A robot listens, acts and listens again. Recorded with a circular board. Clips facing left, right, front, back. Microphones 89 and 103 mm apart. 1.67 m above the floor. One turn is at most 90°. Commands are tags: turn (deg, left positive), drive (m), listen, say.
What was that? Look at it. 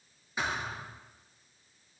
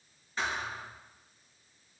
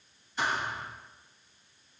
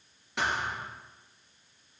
<turn deg="90"/>
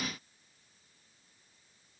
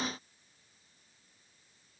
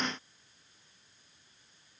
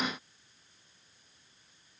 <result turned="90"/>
<turn deg="80"/>
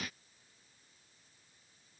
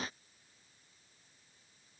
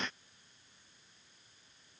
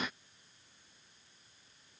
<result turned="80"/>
<say>Facing where the thud came from. I can't hear it now.</say>